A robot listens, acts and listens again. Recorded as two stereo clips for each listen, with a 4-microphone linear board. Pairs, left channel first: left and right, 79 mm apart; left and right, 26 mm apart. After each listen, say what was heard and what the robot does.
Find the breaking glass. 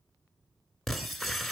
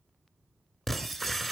Turn 30° left.
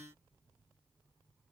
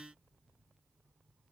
Keep listening.
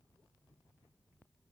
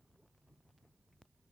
I heard breaking glass, but can't make it out now. It was about 30° right or 150° left.